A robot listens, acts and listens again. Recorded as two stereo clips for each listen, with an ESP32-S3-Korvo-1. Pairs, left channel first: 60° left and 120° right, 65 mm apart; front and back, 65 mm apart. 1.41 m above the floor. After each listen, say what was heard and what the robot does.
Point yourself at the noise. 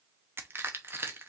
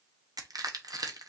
The crushing: 170° right. Turn 170° right.
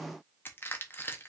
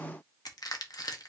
Facing the crushing.